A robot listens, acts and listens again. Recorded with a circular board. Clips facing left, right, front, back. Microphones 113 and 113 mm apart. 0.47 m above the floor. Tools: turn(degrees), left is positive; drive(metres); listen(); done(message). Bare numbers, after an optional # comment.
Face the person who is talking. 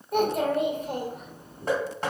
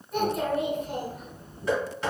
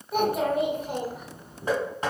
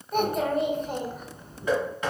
# The child speaking: 85° left.
turn(85)
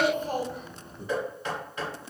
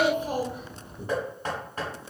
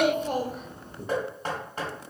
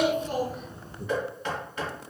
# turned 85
# The child speaking is now 15° right.
turn(-15)
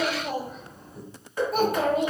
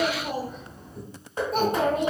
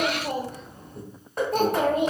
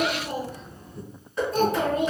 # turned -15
done("Facing the child speaking.")